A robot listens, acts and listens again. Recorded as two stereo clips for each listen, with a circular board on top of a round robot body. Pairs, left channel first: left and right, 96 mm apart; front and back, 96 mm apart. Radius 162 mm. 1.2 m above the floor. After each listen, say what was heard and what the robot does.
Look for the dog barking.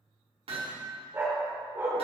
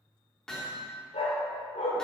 The dog barking: 20° right. Turn 20° right.
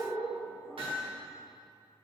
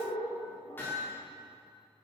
Facing the dog barking.